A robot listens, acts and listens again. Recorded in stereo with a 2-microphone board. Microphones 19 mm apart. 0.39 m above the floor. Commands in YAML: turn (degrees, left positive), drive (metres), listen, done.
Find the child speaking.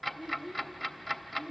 turn: -50
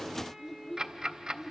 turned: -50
done: "Found it: a child speaking, straight ahead."